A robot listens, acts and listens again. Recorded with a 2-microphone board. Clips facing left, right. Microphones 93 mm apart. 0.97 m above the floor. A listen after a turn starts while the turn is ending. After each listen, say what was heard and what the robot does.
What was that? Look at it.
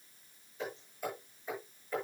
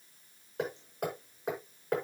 The hammering: about 65° right or 115° right. Turn 65° right.
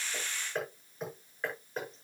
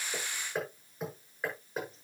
Found it: hammering, straight ahead, over 4 m away.